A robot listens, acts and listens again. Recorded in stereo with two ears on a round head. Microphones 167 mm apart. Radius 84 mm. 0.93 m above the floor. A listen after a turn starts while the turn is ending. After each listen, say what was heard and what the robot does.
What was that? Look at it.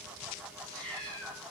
Turn 30° left.
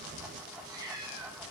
So it is at 20° right. Turn 20° right.
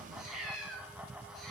Found it: a cat meowing, straight ahead, over 4 m away.